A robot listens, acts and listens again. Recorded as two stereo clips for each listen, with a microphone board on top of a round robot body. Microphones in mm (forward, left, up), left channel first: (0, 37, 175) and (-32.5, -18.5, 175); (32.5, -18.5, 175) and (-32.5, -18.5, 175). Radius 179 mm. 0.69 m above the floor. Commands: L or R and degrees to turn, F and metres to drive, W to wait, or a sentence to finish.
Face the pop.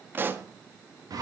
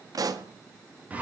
R175
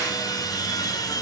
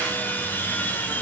I heard a pop from this way, but can't make it out now.